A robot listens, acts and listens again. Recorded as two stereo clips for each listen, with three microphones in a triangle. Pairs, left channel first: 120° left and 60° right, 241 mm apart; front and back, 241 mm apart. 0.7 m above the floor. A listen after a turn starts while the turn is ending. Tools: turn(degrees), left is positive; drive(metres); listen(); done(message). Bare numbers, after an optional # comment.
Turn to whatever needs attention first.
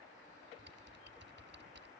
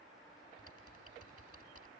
listen()
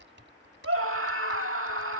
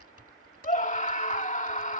# The scream: 55° right.
turn(-55)
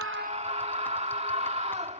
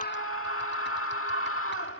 done("Facing the scream.")